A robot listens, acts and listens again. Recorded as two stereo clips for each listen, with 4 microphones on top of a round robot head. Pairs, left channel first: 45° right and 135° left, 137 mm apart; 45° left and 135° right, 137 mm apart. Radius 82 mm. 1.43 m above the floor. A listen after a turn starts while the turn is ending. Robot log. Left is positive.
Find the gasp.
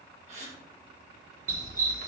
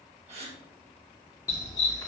note: The gasp: straight behind.
cmd yaw +180
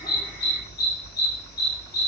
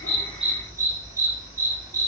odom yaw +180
end: Facing where the gasp came from. I can't hear it now.